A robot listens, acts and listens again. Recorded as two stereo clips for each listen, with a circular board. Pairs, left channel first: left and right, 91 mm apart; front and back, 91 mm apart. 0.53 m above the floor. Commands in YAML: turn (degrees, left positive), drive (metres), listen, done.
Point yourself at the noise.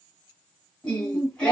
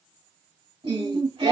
turn: 170
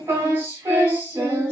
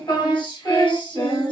turn: -30
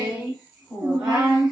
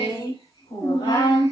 turn: -10
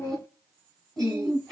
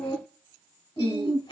done: "Facing the singing, 1 to 2 m away."